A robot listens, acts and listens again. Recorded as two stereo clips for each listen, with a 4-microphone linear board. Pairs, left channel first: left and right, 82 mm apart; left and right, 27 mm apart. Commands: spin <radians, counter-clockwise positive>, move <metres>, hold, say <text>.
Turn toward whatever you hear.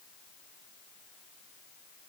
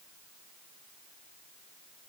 hold
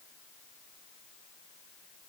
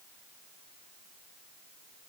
hold
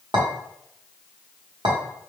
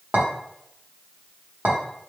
spin -1.22
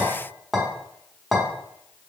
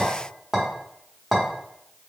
say Facing the clink.